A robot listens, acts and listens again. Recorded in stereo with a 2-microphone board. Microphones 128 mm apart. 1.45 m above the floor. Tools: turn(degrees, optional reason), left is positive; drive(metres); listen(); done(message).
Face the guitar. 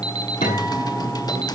turn(degrees=90)
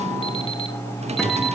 listen()
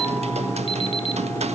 listen()
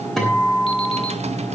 done("Found it: a guitar, straight ahead, over 4 m away.")